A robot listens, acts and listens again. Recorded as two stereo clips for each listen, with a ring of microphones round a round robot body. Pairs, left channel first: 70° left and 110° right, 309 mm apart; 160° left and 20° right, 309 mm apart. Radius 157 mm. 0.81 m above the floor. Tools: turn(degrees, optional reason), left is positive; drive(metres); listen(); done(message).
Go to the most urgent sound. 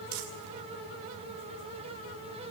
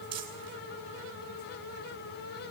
listen()
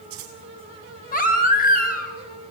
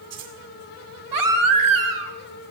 drive(metres=1.0)
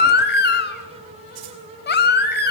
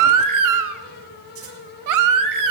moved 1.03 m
turn(degrees=10, reason="The baby crying is now 10° left.")
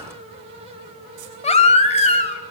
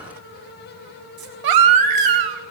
drive(metres=1.0)
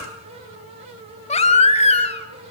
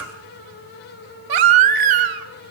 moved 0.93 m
drive(metres=1.0)
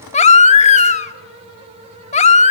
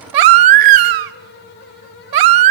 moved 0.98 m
drive(metres=1.0)
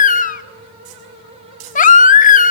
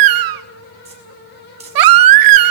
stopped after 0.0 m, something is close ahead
done("I am next to the baby crying.")